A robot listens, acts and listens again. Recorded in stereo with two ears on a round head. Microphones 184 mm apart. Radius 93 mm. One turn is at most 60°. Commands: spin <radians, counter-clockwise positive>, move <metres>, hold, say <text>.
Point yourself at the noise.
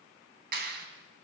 spin -0.96
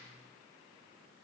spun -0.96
hold
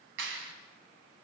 spin -1.05
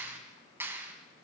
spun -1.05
spin -0.17
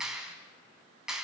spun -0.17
say Facing the clap, 2 to 4 m away.